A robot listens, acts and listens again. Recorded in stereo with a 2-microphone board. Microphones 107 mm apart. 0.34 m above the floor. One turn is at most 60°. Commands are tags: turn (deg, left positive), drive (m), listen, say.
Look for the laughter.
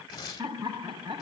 <turn deg="-45"/>
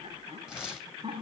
<turn deg="-60"/>
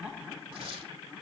<turn deg="-10"/>
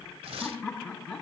<turn deg="10"/>
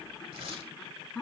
<say>Facing the laughter.</say>